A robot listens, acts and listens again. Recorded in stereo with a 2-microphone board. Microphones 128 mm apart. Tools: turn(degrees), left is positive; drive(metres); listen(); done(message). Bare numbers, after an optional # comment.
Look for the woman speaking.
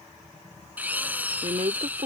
# The woman speaking: about 60° right or 120° right.
turn(-60)
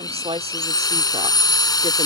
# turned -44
# So it is at 60° right.
turn(-60)
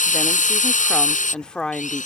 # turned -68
done("Facing the woman speaking.")